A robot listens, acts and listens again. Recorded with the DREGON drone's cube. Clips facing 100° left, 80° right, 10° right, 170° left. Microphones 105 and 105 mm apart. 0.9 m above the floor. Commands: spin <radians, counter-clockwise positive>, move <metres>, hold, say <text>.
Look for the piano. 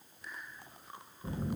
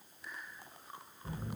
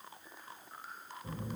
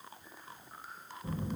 hold
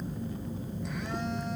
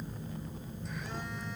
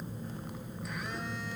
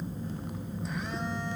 hold
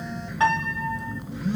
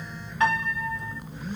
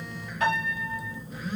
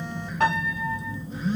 spin 2.79
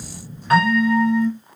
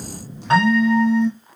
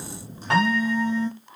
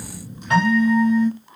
spin -0.26
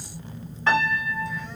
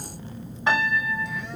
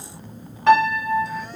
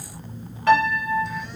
say Found it: a piano, straight ahead, 1 to 2 m away.